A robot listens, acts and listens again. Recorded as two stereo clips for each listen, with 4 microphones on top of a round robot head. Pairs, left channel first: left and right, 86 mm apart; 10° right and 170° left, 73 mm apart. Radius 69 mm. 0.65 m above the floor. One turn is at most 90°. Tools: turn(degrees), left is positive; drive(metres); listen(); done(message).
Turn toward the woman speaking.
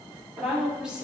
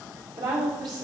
turn(degrees=-90)
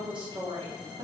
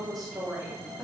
turn(degrees=-85)
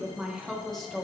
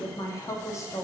turn(degrees=15)
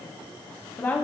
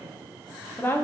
turn(degrees=40)
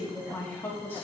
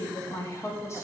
turn(degrees=30)
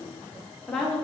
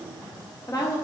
turn(degrees=10)
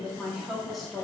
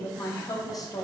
done("Facing the woman speaking.")